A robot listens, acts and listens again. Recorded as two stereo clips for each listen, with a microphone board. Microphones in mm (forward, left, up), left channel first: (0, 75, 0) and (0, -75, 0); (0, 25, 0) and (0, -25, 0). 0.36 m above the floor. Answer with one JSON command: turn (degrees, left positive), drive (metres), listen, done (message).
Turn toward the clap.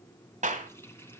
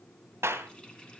{"turn": -55}
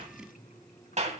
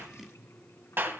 {"turn": -60}
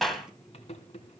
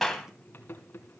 {"done": "Facing the clap, 2 to 4 m away."}